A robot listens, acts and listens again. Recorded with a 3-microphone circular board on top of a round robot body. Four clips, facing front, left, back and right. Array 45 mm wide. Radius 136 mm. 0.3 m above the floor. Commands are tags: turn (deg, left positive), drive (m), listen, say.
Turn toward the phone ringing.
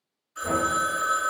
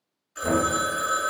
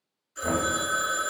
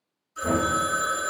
<turn deg="70"/>
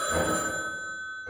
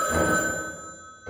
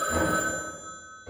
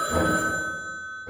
<turn deg="25"/>
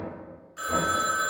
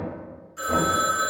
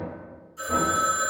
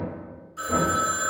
<turn deg="10"/>
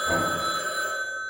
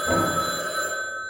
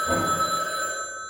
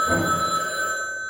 <say>Facing the phone ringing, 1 to 2 m away.</say>